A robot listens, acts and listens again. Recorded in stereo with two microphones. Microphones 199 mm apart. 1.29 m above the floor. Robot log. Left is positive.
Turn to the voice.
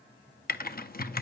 cmd idle
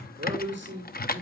note: The man speaking: about 70° right or 110° right.
cmd yaw -70
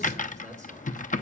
cmd idle
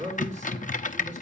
note: So it is at 40° right.
cmd yaw -40
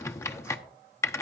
cmd idle
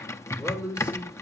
end: Facing the man speaking, over 4 m away.